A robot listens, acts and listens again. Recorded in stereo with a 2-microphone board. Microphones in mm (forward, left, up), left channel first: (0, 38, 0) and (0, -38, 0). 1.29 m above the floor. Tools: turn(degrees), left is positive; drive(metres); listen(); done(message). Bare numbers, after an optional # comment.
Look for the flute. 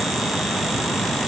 listen()
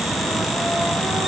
listen()
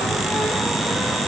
done("I can't make out a flute.")